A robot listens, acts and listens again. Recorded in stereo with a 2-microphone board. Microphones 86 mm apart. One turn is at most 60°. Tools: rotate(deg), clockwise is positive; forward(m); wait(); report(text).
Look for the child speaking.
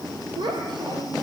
rotate(60)
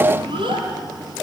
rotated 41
rotate(60)
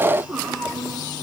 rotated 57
rotate(10)
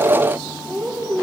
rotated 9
report("Facing the child speaking.")